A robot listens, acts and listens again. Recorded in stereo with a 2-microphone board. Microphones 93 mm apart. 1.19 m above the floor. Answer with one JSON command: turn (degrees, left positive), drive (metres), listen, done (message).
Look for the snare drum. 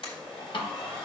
{"turn": 65}
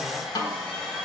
{"turn": 50}
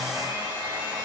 {"listen": true}
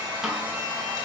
{"listen": true}
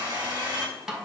{"done": "Facing the snare drum."}